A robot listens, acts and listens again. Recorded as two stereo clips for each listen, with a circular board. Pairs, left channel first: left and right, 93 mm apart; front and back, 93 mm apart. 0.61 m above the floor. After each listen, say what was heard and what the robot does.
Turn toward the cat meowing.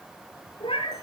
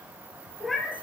The cat meowing: 90° left. Turn 90° left.
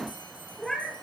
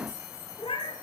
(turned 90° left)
Facing the cat meowing, 2 to 4 m away.